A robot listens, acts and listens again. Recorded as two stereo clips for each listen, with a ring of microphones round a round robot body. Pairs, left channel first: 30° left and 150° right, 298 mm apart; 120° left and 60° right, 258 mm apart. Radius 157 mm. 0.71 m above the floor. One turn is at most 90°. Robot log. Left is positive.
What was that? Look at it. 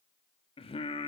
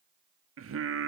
note: The singing: 40° right.
cmd yaw -40
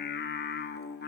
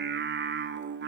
note: The singing is now 20° right.
cmd yaw -20
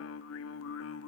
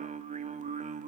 end: Facing the singing, 1 to 2 m away.